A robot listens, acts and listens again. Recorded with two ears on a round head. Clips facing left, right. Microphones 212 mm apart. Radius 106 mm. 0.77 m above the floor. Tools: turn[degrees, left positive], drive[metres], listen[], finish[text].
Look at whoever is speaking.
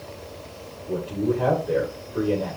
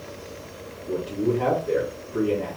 Thought: The man speaking: about 35° right or 145° right.
Action: turn[-35]
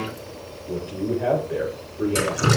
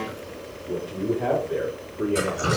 Action: finish[Found it: a man speaking, straight ahead.]